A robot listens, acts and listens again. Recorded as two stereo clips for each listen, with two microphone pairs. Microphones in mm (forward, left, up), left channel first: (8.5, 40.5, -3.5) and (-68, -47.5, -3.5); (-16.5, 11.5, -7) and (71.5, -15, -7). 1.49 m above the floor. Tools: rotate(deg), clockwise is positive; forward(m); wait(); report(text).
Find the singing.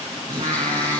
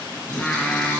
rotate(110)
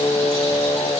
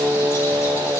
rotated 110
rotate(-10)
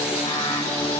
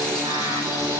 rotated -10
rotate(-10)
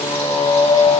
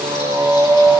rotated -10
rotate(-15)
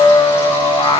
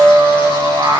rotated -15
rotate(-15)
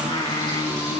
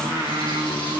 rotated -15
rotate(-10)
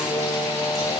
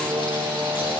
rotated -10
report("Facing the singing, 2 to 4 m away.")